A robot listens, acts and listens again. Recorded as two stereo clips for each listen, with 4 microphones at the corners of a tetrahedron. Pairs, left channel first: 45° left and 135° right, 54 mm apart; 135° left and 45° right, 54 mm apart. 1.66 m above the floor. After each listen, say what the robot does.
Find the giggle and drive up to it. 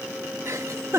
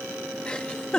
Turn 155° right.
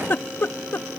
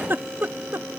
Drive 1.0 m forward.
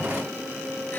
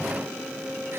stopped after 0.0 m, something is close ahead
Keep listening.
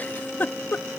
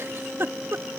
Turn 10° right.
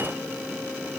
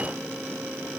Keep listening.
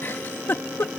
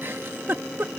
Something is in my way. I am facing the giggle but have not reached it.